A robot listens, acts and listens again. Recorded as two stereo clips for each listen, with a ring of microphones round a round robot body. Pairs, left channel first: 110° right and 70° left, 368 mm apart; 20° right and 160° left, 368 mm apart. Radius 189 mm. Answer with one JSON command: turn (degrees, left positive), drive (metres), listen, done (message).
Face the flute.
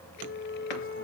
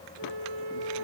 {"turn": 180}
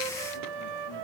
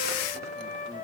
{"turn": 50}
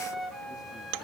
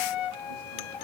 {"turn": -25}
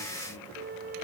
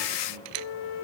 {"done": "Facing the flute."}